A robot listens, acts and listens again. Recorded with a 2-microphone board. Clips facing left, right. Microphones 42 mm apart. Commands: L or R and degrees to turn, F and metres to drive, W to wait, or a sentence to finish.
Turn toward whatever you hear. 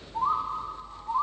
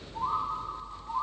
L35
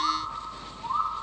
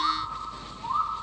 Facing the bird.